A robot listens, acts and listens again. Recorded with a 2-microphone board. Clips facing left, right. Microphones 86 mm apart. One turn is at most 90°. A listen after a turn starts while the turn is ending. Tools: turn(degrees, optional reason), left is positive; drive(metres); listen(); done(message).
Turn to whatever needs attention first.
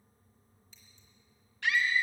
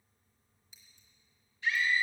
turn(degrees=75, reason="The scream: about 75° left or 105° left.")
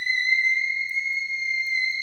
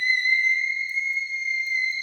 done("Facing the scream, under 1 m away.")